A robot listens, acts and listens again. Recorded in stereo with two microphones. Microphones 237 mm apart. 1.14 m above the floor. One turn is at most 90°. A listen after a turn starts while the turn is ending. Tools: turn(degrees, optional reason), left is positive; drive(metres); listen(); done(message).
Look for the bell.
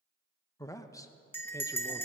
turn(degrees=30)
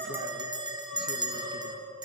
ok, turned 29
turn(degrees=-15, reason="So it is at 15° right.")
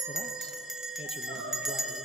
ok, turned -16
done("Found it: a bell, straight ahead, 1 to 2 m away.")